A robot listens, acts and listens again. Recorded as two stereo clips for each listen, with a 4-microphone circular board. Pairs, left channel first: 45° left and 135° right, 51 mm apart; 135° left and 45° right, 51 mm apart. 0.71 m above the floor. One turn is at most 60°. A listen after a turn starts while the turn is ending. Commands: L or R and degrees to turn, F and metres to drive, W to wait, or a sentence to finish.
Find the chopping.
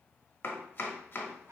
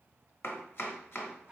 L60
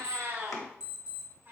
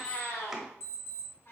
L35
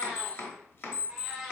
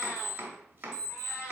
Facing the chopping, under 1 m away.